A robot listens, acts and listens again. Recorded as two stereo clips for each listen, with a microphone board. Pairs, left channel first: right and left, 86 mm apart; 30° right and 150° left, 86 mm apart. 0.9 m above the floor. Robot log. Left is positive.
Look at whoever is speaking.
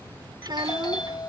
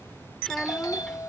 note: The child speaking: 55° left.
cmd yaw +55
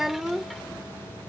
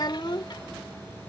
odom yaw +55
end: Facing the child speaking.